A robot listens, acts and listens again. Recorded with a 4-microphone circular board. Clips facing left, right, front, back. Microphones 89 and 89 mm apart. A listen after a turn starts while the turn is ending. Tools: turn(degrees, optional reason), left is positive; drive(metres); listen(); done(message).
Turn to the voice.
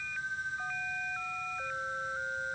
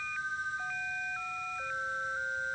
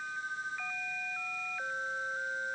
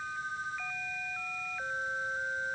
listen()
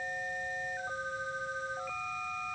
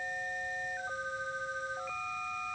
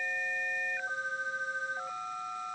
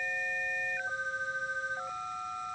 listen()
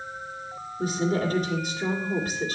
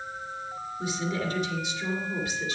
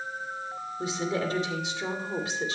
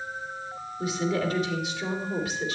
turn(degrees=55, reason="The woman speaking: 55° left.")
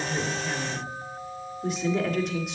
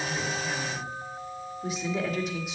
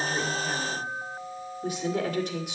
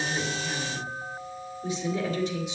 done("Found it: a woman speaking, straight ahead, 2 to 4 m away.")